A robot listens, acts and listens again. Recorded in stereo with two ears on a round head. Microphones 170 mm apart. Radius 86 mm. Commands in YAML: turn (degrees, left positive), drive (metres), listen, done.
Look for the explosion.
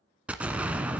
turn: -30
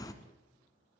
turn: 20
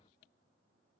done: "I heard an explosion from this way, but can't make it out now."